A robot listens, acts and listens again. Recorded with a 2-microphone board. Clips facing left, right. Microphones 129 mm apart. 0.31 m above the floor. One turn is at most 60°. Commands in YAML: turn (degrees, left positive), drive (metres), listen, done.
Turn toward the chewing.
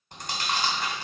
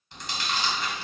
turn: 50
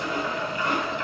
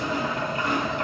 turn: 60
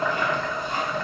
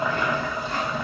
turn: 10
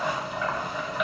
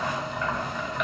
listen: true
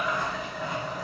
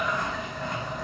done: "Facing where the chewing came from. I can't hear it now."